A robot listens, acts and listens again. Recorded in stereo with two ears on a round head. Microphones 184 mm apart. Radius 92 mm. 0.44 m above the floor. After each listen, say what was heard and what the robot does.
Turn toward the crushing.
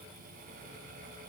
Keep listening.
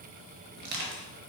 The crushing: about 50° right or 130° right. Turn 50° right.
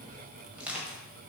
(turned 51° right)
Found it: crushing, straight ahead.